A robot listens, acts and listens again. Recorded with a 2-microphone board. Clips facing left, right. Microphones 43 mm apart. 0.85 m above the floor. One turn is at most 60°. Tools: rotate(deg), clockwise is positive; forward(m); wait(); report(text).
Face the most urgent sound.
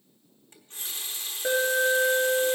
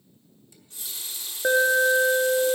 rotate(30)
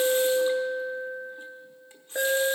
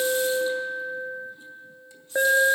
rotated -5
rotate(25)
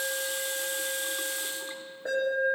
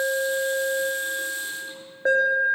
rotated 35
rotate(60)
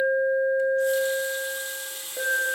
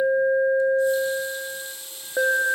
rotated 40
rotate(60)
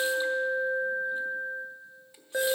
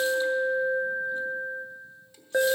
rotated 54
rotate(25)
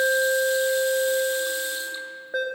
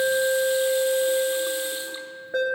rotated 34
rotate(-10)
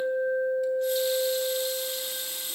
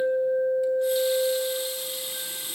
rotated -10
report("Found it: an alarm, straight ahead, 1 to 2 m away.")